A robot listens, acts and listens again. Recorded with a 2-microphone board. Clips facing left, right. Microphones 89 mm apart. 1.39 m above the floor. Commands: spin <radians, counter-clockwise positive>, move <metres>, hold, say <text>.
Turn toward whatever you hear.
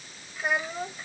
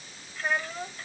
spin 0.52
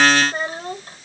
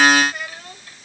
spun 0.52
spin 2.53
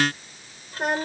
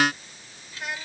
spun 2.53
spin 0.79
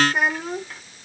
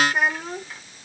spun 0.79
say Found it: a child speaking, straight ahead.